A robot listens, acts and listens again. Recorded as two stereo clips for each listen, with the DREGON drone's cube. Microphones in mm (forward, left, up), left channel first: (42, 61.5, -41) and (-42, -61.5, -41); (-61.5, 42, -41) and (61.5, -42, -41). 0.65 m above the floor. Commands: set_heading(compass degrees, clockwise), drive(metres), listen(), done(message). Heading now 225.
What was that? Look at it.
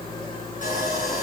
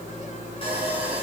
set_heading(135)
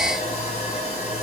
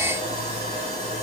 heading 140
set_heading(130)
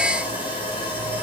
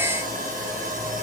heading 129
done("Found it: sawing, straight ahead, over 4 m away.")